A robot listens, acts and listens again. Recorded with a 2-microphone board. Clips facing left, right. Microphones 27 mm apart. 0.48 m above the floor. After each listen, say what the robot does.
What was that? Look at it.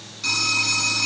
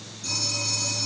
Turn 70° left.
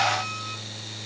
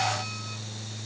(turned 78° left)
Keep listening.
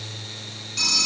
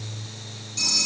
Turn 30° left.
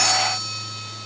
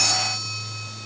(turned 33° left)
Keep listening.
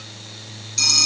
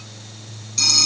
Found it: a phone ringing, straight ahead.